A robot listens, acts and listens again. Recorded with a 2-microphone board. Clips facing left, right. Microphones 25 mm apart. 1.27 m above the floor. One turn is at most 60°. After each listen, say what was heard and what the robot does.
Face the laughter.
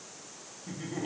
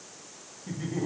Turn 30° left.
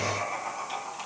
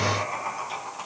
So it is at 15° right. Turn 15° right.
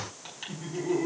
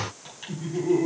Facing the laughter, 2 to 4 m away.